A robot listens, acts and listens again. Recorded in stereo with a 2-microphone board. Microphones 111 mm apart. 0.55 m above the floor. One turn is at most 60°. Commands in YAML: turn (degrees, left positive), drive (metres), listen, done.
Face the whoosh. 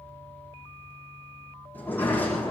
listen: true
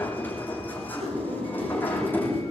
turn: -60
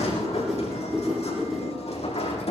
done: "Facing the whoosh."